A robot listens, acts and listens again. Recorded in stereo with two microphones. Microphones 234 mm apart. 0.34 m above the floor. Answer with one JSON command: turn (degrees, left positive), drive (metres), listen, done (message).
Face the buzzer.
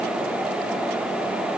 {"listen": true}
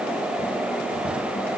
{"listen": true}
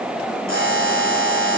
{"turn": -55}
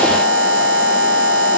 {"turn": -65}
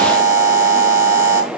{"turn": -15}
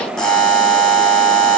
{"done": "Facing the buzzer."}